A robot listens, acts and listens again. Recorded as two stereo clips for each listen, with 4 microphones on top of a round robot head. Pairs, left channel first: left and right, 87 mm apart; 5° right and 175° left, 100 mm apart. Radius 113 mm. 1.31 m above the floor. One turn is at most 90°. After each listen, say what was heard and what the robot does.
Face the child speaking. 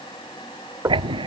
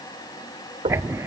Keep listening.
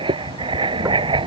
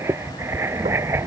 Keep listening.
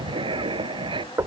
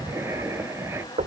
I can't make out a child speaking, only writing and knocking.